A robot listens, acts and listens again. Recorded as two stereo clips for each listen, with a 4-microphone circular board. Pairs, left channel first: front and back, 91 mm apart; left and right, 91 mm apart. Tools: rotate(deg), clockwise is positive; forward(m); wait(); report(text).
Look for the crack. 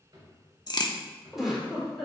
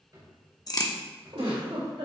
rotate(-40)
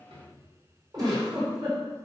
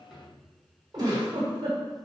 report("I heard a crack from this way, but can't make it out now.")